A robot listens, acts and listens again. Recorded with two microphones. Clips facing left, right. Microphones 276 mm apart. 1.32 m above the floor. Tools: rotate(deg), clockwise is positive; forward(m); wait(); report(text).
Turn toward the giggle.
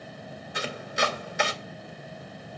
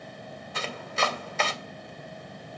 wait()
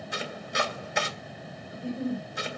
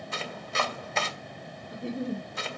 rotate(75)
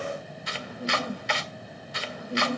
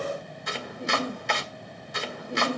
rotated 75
rotate(25)
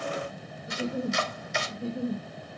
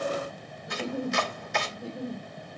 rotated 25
report("Found it: a giggle, straight ahead.")